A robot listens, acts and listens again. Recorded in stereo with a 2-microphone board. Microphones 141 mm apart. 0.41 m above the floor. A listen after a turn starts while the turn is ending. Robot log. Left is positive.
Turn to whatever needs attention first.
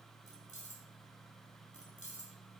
cmd idle
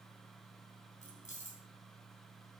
cmd idle
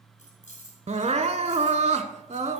note: The crying: about 55° right or 125° right.
cmd yaw -55
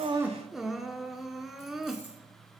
end: Found it: crying, straight ahead, under 1 m away.